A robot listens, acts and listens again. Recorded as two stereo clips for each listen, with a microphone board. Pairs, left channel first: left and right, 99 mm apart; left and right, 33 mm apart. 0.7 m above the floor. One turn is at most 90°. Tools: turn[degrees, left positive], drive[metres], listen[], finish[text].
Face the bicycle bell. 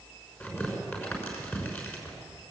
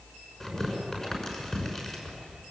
Action: listen[]
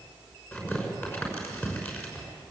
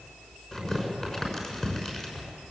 Action: listen[]
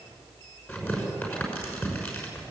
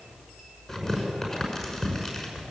Action: finish[I can't make out a bicycle bell to turn to.]